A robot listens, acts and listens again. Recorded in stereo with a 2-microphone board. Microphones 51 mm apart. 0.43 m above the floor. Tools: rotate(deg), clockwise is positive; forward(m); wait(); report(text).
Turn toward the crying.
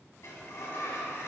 wait()
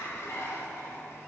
wait()
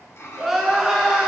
rotate(30)
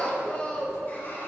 rotate(-25)
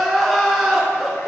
report("Facing the crying.")